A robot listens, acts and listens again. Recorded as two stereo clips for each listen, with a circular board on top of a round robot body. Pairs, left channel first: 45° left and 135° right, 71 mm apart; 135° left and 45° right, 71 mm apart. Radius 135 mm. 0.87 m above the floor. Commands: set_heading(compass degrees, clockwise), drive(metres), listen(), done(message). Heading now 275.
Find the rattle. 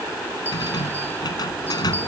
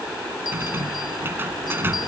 set_heading(260)
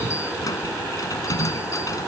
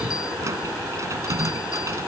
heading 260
done("Found it: a rattle, straight ahead.")